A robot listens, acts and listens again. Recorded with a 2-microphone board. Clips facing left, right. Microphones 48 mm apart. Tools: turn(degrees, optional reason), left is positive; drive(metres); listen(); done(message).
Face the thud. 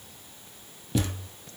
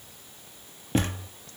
turn(degrees=-40, reason="The thud: about 40° right or 140° right.")
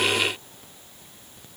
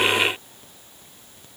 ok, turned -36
listen()
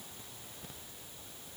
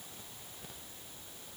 done("I heard a thud, but can't make it out now. It was about 5° right or 105° right.")